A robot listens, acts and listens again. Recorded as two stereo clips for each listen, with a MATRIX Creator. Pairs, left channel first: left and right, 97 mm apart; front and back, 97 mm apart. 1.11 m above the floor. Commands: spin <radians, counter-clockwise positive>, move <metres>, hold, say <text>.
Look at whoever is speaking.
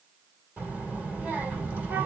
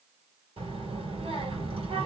spin -2.88
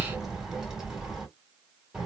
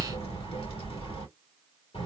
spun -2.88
say Found it: a child speaking, straight ahead.